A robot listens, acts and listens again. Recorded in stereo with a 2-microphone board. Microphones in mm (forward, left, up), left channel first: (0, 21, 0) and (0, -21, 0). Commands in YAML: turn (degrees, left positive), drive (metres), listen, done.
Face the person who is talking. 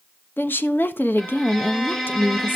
turn: 55
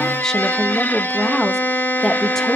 turn: 10
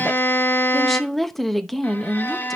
done: "Found it: a woman speaking, straight ahead."